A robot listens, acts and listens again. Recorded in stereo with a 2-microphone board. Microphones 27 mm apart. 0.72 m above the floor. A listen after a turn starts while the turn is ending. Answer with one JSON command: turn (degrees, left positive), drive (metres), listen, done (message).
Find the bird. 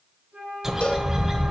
{"turn": -25}
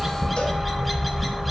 {"done": "Facing the bird."}